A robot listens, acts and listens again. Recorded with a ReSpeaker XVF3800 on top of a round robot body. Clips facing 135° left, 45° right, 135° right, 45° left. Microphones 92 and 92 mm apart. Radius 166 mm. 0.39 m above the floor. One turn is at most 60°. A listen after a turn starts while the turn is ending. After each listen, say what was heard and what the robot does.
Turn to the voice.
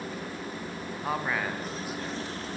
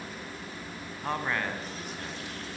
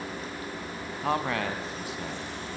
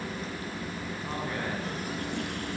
The man speaking: 140° right. Turn 60° right.
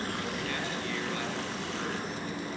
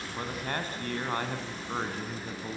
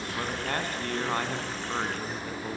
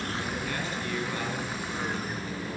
The man speaking is now 90° right. Turn 60° right.
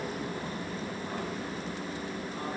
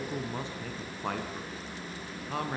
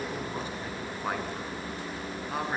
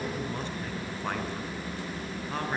The man speaking is now 55° right. Turn 55° right.
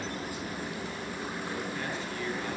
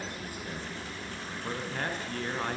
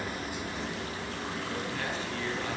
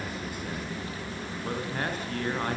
Found it: a man speaking, straight ahead, over 4 m away.